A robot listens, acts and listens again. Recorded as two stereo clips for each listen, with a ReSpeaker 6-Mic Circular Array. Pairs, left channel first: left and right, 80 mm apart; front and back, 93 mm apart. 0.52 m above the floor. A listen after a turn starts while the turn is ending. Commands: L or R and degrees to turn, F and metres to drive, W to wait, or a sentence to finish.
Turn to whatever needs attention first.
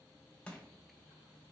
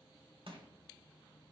W
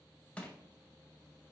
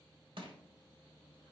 W
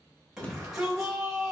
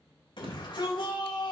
R10
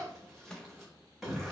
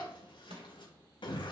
Facing the shout, 2 to 4 m away.